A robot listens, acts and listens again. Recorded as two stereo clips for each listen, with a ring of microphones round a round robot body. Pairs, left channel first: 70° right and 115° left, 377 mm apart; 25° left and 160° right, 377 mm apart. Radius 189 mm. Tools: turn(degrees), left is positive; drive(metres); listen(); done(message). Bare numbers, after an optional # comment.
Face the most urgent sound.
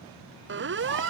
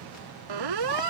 # The siren: 175° left.
turn(175)
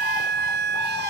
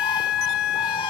# The siren is now 50° left.
turn(50)
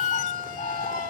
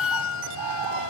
# The siren is now 35° right.
turn(-35)
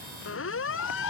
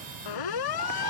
# The siren is now 10° right.
turn(-10)
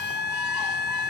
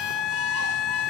done("Found it: a siren, straight ahead.")